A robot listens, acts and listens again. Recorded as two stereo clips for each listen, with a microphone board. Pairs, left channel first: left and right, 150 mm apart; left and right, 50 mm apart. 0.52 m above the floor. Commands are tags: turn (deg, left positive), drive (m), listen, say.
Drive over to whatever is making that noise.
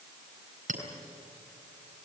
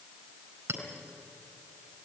<turn deg="-65"/>
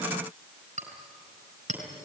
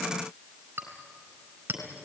<turn deg="-50"/>
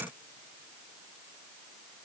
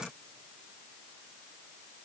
<listen/>
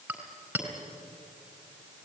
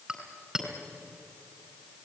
<turn deg="-10"/>
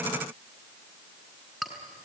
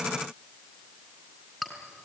<drive m="1.0"/>
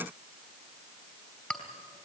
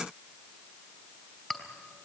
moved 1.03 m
<turn deg="10"/>
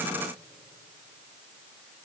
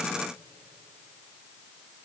<listen/>
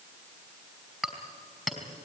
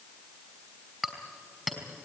<drive m="1.0"/>
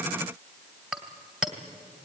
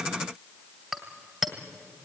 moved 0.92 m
<drive m="1.0"/>
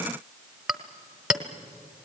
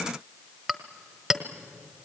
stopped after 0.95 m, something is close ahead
<say>Arrived at the clink, straight ahead.</say>